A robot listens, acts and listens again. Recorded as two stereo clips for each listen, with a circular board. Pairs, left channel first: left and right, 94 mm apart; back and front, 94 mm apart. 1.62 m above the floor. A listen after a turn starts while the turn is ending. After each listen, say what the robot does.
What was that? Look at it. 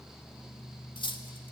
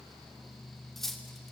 Turn 95° left.
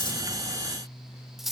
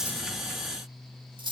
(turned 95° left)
Facing the cutlery clinking.